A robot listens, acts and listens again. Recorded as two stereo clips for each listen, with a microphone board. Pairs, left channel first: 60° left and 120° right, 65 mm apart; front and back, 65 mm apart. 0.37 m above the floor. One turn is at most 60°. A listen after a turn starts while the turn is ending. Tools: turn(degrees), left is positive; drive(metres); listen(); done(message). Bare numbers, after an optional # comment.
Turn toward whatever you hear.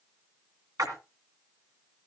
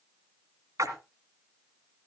# The splash: 145° right.
turn(-60)
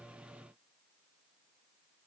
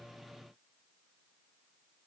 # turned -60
# Nothing new. It was at 85° right.
turn(-60)
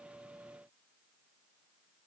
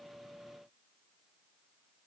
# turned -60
# Nothing new. It was at 25° right.
turn(-25)
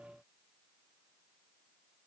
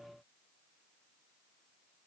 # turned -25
done("I heard a splash from this way, but can't make it out now.")